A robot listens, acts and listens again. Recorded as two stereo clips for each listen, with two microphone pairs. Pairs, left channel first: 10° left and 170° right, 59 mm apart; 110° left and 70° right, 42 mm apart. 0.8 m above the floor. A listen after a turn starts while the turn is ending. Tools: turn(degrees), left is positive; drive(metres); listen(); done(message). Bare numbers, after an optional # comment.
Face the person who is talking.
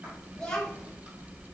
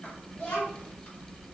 # The child speaking: 75° left.
turn(75)
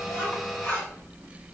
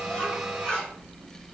listen()
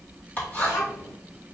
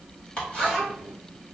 # The child speaking is now 15° left.
turn(15)
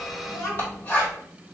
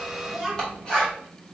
done("Found it: a child speaking, straight ahead, 1 to 2 m away.")